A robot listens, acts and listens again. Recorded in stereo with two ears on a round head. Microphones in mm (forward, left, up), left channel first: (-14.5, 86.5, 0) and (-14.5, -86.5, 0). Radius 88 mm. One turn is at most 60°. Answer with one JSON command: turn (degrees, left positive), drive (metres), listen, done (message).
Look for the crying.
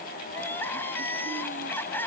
{"turn": 30}
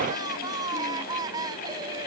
{"turn": -20}
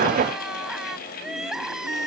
{"done": "Found it: crying, straight ahead."}